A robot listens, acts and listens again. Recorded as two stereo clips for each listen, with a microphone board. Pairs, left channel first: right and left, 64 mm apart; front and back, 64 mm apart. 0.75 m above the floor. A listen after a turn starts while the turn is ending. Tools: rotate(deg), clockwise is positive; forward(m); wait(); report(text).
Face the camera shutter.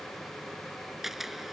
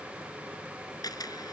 report("Facing the camera shutter.")